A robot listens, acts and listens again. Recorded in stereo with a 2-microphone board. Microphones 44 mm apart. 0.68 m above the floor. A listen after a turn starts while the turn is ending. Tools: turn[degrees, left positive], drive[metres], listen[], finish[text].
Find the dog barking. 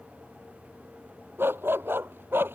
Thought: The dog barking: about 55° right or 125° right.
Action: turn[-55]
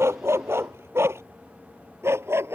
Thought: So it is at 75° right.
Action: turn[-75]
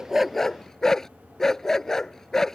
Thought: The dog barking is now 10° left.
Action: turn[10]
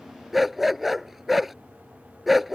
Action: finish[Found it: a dog barking, straight ahead.]